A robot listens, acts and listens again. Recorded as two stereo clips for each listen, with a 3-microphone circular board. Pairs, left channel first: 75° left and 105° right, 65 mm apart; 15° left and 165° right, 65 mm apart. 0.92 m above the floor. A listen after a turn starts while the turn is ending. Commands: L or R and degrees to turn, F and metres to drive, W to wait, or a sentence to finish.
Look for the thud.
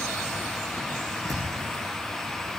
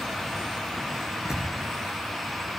R85
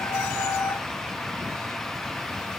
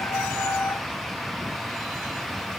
Facing where the thud came from. I can't hear it now.